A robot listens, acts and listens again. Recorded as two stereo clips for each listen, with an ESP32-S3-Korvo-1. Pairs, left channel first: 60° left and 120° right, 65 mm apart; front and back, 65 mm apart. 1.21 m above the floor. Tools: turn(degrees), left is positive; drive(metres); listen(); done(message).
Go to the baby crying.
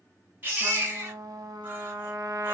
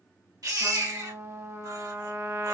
turn(degrees=180)
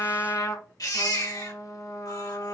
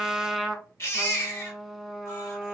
turn(degrees=50)
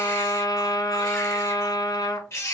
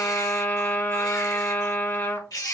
turn(degrees=15)
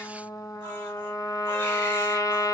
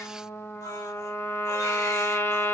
listen()
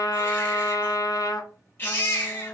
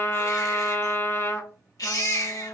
drive(metres=1.0)
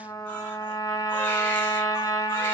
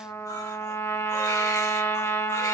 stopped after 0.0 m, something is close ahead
listen()
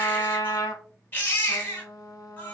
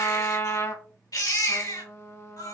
done("Blocked. The baby crying is further on, straight ahead.")